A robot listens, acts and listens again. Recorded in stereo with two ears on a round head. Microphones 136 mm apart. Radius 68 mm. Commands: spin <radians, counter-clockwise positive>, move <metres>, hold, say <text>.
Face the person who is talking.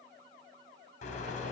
hold
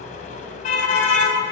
hold
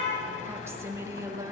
spin -0.44
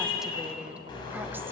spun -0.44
hold
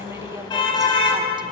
hold
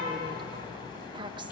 spin -0.52
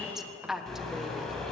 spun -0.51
say Found it: a woman speaking, straight ahead, 1 to 2 m away.